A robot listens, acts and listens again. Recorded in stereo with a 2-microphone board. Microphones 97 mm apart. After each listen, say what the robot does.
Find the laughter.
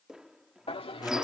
Turn 75° left.
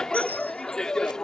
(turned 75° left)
Facing the laughter.